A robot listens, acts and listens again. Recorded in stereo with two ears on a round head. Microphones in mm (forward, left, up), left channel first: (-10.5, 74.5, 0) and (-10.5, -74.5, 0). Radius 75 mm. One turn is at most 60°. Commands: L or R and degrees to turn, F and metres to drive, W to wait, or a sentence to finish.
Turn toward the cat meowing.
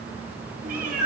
R55
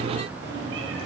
R60
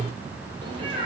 R30
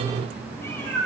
L10
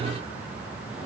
W
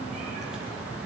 W
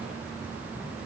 I heard a cat meowing from this way, but can't make it out now.